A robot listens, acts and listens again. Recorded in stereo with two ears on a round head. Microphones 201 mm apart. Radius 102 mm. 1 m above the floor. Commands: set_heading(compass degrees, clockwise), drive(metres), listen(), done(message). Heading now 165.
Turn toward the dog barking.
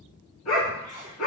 set_heading(100)
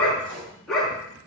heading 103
done("Found it: a dog barking, straight ahead, 2 to 4 m away.")